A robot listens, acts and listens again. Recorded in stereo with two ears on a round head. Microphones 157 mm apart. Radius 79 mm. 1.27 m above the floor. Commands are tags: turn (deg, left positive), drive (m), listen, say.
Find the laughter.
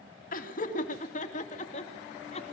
<turn deg="40"/>
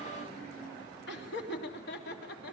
<turn deg="110"/>
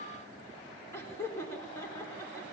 <turn deg="15"/>
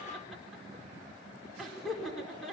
<say>Found it: laughter, straight ahead, over 4 m away.</say>